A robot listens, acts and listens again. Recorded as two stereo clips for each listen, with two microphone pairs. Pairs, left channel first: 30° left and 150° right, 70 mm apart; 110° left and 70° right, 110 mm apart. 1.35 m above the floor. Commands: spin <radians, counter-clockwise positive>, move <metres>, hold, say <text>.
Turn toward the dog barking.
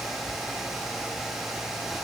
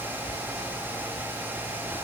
hold
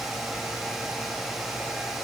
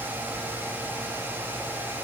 hold
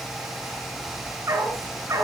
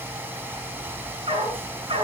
spin -1.75
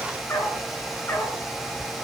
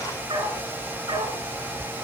spin -0.44
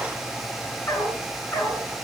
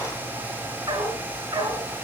spin -0.44
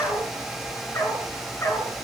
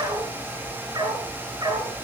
spin -0.35
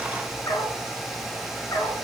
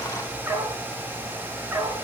say Facing the dog barking.